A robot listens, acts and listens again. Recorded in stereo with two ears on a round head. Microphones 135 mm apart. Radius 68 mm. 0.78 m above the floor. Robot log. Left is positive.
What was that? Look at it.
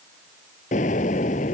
note: The explosion: about 55° left or 125° left.
cmd yaw +55
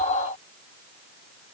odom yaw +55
cmd idle
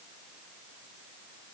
end: I heard an explosion, but can't make it out now. It was about straight ahead or 70° left.